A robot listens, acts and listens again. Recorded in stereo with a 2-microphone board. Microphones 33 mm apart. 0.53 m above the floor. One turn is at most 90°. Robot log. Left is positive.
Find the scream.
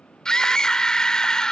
note: The scream: about 20° left or 160° left.
cmd yaw +20
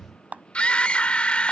note: So it is at 140° left.
cmd yaw +90
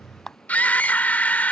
note: The scream is now 70° left.
cmd yaw +70
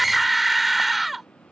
end: Facing the scream.